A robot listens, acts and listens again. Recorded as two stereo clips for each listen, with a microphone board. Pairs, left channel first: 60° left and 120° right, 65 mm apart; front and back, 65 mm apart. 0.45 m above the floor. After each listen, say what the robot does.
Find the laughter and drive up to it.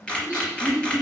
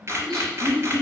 Turn 85° left.
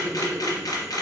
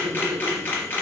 Turn 10° left.
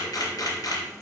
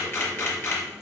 Keep listening.
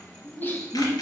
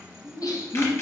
Drive 1.0 m forward.
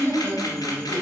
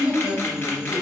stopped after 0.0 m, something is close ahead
Something is in my way. I am facing the laughter but have not reached it.